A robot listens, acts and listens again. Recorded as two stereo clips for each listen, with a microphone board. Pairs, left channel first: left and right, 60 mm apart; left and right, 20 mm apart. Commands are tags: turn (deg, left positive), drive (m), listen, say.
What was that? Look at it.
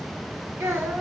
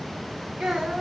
<turn deg="-35"/>
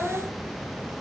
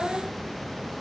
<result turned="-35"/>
<say>Facing the child speaking, 1 to 2 m away.</say>